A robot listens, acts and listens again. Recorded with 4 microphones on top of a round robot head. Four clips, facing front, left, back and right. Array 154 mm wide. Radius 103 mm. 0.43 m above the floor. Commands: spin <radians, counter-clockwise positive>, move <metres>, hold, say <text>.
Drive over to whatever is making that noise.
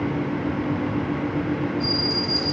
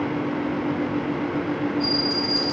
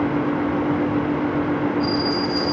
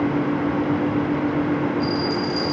spin 0.52
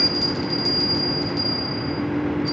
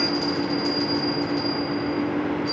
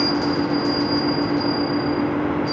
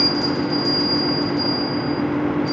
move 1.0
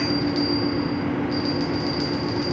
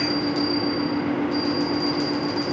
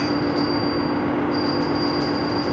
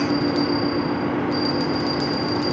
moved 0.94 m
spin -0.17
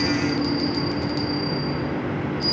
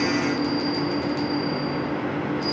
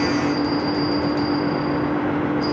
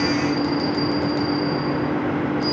move 1.0
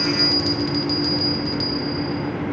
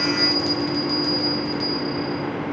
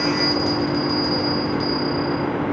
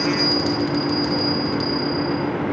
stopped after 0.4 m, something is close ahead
say Arrived at the bell, straight ahead.